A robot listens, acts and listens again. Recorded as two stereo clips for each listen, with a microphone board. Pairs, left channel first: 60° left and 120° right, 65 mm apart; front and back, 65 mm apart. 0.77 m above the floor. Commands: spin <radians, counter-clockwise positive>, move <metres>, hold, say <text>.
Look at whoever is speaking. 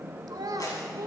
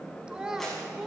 spin -1.66
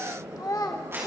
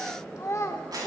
spin 0.79
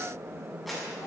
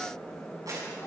hold
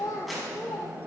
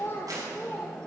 spin 0.96
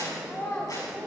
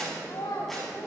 say Facing the child speaking, 2 to 4 m away.